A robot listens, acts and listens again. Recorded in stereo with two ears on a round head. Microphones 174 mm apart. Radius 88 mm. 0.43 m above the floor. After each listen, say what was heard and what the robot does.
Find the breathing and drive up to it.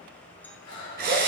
The breathing: about 70° left or 110° left. Turn 70° left.
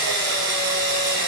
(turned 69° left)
Keep listening.
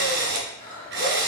So it is at 40° left. Turn 40° left.
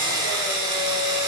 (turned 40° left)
Keep listening.
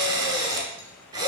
Keep listening.
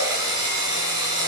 I heard breathing from this way, but can't make it out now. I did not reach it.